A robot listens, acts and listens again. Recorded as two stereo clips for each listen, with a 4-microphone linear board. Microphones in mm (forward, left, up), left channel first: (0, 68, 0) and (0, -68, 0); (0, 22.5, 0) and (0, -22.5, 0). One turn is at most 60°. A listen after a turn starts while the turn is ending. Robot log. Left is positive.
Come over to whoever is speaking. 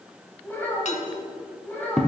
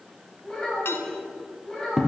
cmd yaw +30
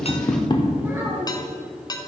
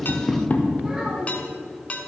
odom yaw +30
cmd idle
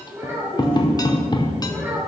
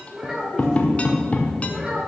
note: So it is at 15° right.
cmd yaw -15
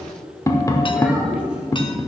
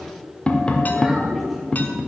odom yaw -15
cmd idle
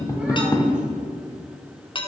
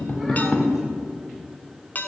cmd idle
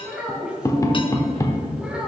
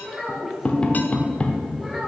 cmd fwd 1.0
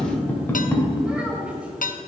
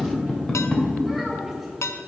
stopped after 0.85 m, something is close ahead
cmd idle
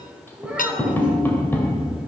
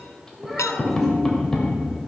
end: Blocked. The child speaking is further on, straight ahead.